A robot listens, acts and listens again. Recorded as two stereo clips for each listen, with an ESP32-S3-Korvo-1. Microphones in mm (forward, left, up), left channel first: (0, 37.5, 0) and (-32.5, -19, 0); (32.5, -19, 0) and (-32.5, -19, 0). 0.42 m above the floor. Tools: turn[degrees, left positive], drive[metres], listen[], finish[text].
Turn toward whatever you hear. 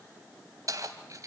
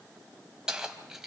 Thought: The keys jangling: 100° right.
Action: turn[-100]
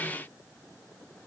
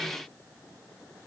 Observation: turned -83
Thought: Nothing new. It was at 20° right.
Action: turn[-20]
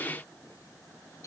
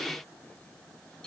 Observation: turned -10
Thought: Nothing new. It was at 10° right.
Action: turn[-10]
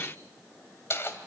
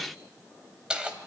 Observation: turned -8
Thought: The keys jangling is now 105° left.
Action: turn[105]
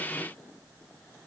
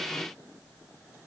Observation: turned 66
Thought: Nothing new. It was at 40° left.
Action: turn[40]
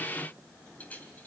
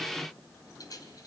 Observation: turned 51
Action: finish[Found it: keys jangling, straight ahead, 2 to 4 m away.]